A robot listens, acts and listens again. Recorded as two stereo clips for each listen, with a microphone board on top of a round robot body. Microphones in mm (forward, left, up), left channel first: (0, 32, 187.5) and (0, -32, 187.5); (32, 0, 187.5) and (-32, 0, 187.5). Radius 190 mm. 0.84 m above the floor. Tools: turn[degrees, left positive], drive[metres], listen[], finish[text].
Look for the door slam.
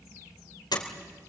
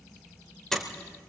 Thought: The door slam: 85° left.
Action: turn[85]
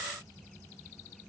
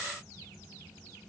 Action: finish[I heard a door slam from this way, but can't make it out now.]